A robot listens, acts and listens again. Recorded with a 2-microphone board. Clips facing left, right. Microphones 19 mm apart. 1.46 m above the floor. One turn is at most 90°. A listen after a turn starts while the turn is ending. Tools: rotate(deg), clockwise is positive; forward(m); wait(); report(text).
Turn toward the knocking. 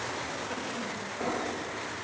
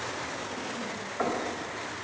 rotate(90)
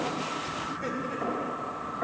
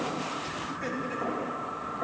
report("Found it: knocking, straight ahead, over 4 m away.")